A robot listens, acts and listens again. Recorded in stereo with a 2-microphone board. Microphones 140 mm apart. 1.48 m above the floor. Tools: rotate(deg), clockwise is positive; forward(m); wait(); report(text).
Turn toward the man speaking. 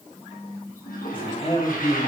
rotate(-50)
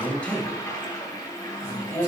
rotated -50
rotate(-20)
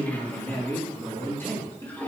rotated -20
rotate(-15)
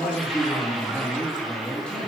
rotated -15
report("Facing the man speaking, over 4 m away.")